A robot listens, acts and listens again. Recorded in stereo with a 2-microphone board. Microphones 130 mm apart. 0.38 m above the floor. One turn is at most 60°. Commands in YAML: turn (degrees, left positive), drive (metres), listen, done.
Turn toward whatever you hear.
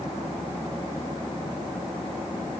listen: true
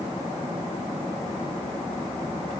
listen: true
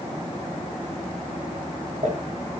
turn: -60
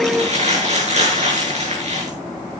turn: -60
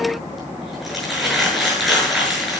done: "Found it: crumpling, straight ahead, over 4 m away."